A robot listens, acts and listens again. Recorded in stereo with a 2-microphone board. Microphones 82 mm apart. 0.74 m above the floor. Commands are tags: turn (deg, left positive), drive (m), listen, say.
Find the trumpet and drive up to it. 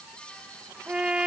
<turn deg="-30"/>
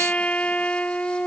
<turn deg="15"/>
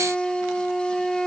<drive m="1.0"/>
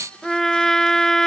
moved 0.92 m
<drive m="1.0"/>
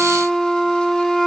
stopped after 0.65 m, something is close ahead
<say>Arrived at the trumpet, straight ahead.</say>